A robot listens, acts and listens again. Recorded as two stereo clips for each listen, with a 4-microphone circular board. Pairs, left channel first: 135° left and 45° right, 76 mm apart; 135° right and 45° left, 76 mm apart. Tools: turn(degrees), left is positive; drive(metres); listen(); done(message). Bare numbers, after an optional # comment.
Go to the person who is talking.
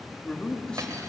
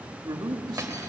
# The man speaking: 55° left.
turn(55)
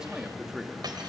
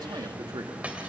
# The man speaking is now 35° left.
turn(35)
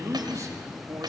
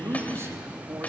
drive(1.0)
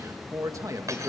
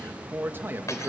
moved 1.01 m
# The man speaking is now 10° right.
turn(-10)
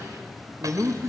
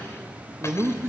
drive(1.0)
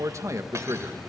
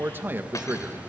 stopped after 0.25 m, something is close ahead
# The man speaking is now 10° right.
turn(-10)
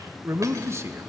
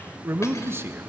done("I am next to the man speaking.")